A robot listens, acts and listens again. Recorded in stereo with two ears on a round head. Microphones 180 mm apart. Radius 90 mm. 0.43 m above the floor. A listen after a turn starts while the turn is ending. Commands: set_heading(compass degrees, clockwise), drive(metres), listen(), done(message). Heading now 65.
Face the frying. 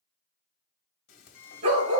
set_heading(15)
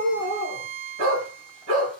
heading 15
listen()
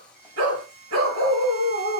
done("Found it: frying, straight ahead, 1 to 2 m away.")